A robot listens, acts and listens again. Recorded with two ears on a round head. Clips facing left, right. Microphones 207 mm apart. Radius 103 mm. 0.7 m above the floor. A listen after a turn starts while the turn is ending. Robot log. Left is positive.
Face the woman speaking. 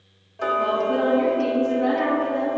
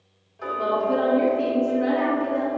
note: The woman speaking: about 45° right or 135° right.
cmd yaw -45
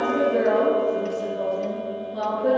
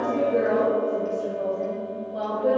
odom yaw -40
end: Found it: a woman speaking, straight ahead, 2 to 4 m away.